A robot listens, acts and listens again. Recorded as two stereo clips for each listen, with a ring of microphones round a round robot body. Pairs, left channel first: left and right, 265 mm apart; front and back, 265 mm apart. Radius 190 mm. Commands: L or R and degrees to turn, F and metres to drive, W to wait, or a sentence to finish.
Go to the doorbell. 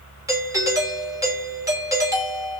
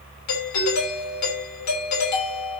R15
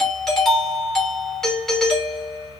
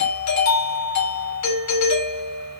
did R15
F1.0
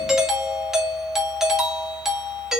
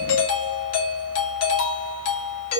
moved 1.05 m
F1.0
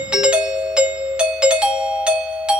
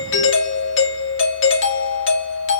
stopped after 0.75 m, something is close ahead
I am next to the doorbell.